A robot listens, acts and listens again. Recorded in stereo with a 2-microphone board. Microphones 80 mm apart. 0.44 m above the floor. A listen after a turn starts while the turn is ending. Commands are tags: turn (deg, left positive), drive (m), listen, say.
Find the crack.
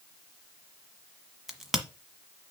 <turn deg="-30"/>
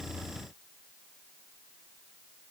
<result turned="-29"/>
<listen/>
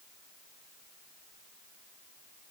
<say>I heard a crack, but can't make it out now. It was about 25° left or 150° right.</say>